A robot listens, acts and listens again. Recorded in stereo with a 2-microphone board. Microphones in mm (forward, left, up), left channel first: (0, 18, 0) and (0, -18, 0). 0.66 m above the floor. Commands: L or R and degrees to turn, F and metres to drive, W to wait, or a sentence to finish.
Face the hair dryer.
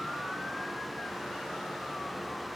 W
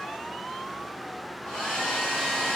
L30
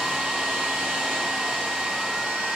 R20
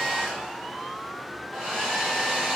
Facing the hair dryer.